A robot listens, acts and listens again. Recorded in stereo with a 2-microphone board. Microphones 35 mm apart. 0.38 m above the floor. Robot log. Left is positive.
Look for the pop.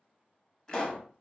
note: The pop: about 20° left or 160° left.
cmd yaw +20
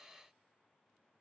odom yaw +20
cmd idle
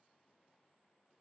end: I heard a pop, but can't make it out now. It was about straight ahead or 140° left.